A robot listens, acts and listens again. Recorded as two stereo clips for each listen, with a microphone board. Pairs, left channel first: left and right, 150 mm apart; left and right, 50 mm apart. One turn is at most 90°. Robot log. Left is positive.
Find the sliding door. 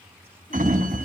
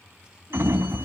note: The sliding door: about 60° right or 120° right.
cmd yaw -60
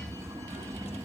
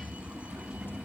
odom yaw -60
note: So it is at 25° right.
cmd yaw -25
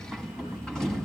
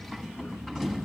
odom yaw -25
end: Found it: a sliding door, straight ahead.